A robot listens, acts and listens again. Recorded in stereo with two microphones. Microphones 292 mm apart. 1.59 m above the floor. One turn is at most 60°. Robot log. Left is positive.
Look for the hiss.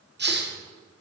note: The hiss: about 35° right or 145° right.
cmd yaw -35
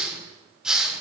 end: Facing the hiss, 1 to 2 m away.